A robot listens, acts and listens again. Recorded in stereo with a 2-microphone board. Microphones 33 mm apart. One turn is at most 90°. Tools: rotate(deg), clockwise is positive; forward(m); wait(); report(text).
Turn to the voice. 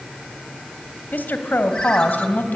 rotate(-65)
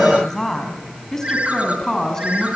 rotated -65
rotate(-15)
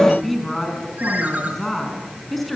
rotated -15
report("Found it: a woman speaking, straight ahead.")